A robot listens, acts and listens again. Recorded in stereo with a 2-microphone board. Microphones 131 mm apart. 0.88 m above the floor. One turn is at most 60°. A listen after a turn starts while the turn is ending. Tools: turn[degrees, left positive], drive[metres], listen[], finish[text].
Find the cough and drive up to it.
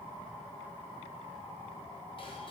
Action: listen[]
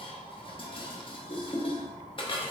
Action: listen[]
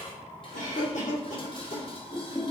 Thought: The cough: about 70° left or 110° left.
Action: turn[60]
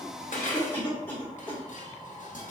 Thought: So it is at 15° left.
Action: turn[15]
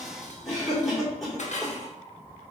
Action: drive[1.0]
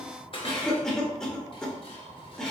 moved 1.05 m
Action: drive[1.0]
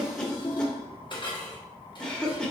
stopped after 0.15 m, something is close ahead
Action: finish[Arrived at the cough, straight ahead.]